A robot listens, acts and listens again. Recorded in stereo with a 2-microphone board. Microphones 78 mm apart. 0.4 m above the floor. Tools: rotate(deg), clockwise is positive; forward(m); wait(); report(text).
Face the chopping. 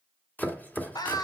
rotate(-20)
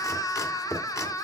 rotate(-140)
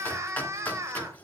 rotate(-20)
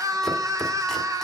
wait()
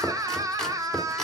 report("Facing the chopping.")